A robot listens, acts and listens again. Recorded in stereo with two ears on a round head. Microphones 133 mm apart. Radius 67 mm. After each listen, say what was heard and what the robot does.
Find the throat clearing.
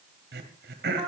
Turn 90° right.
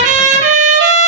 Keep listening.
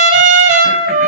Keep listening.
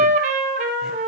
Facing where the throat clearing came from. I can't hear it now.